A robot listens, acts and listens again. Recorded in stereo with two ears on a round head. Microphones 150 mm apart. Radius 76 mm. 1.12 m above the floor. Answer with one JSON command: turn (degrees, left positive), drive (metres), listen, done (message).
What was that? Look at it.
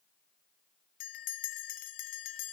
{"turn": 55}
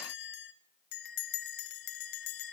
{"turn": 70}
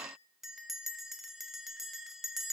{"done": "Found it: a bell, straight ahead."}